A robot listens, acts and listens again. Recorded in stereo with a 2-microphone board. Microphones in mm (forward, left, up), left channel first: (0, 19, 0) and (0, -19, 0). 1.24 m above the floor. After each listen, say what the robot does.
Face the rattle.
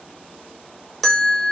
Keep listening.
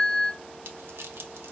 Turn 90° right.
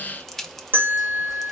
Found it: a rattle, straight ahead, under 1 m away.